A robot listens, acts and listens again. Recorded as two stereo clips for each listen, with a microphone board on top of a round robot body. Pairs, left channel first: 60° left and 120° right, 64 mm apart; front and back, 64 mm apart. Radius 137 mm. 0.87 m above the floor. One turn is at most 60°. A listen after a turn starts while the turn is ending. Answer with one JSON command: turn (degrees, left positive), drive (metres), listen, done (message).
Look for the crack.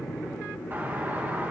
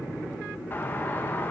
{"listen": true}
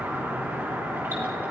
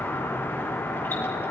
{"listen": true}
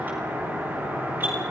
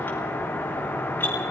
{"done": "I can't make out a crack, only a doorbell."}